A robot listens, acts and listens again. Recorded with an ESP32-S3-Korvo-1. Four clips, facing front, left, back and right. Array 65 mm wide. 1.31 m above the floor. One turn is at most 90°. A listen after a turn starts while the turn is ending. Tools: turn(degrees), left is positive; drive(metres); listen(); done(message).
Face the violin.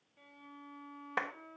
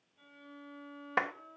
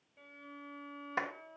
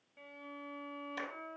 turn(degrees=-90)
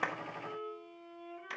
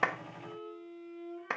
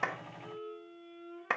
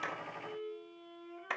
done("Facing the violin.")